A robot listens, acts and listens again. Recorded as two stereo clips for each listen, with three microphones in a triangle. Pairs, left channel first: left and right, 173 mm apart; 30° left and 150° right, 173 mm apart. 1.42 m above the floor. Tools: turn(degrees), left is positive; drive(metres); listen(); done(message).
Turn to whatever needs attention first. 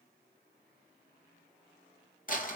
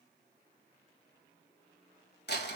listen()
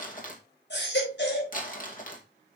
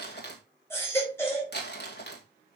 turn(degrees=105)
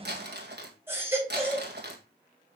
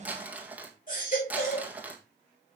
turn(degrees=-15)
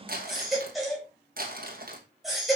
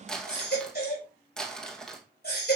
done("Facing the baby crying.")